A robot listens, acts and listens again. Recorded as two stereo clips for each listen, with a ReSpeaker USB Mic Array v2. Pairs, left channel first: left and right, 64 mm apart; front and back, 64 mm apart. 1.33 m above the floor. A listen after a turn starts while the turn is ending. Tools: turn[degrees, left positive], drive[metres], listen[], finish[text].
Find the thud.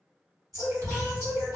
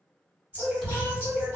Thought: The thud: 85° right.
Action: turn[-85]
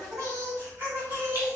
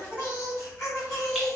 Action: finish[Facing where the thud came from. I can't hear it now.]